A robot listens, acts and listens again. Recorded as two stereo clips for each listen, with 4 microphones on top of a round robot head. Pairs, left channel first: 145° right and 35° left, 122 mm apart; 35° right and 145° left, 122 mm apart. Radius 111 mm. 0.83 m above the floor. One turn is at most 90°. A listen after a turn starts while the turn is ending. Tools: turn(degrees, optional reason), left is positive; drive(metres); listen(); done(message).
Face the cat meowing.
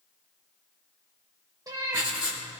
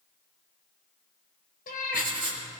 turn(degrees=-30, reason="The cat meowing: 30° right.")
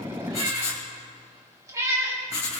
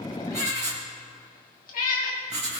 turn(degrees=-30, reason="The cat meowing is now 30° right.")
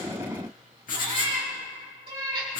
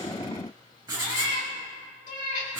turn(degrees=-15, reason="The cat meowing is now 15° right.")
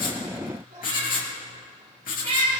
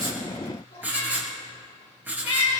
done("Found it: a cat meowing, straight ahead, over 4 m away.")